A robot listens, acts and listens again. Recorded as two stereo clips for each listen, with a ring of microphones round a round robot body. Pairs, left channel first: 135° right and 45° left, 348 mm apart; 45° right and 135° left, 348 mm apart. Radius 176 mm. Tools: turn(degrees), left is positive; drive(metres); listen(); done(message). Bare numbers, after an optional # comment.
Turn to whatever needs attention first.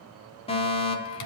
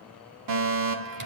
# The fire alarm: 155° left.
turn(155)
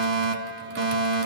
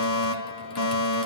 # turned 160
# The fire alarm is now 10° right.
turn(-10)
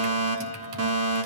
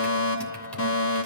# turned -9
done("Facing the fire alarm.")